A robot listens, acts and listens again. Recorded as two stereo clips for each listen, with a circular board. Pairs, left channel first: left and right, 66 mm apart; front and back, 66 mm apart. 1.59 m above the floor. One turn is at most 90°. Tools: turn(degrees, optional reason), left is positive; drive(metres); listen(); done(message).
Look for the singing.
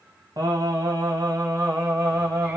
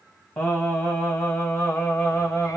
turn(degrees=-60, reason="The singing: 60° right.")
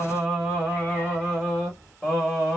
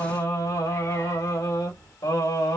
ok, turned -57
turn(degrees=10, reason="The singing is now 10° left.")
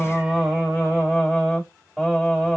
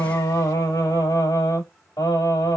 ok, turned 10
done("Facing the singing.")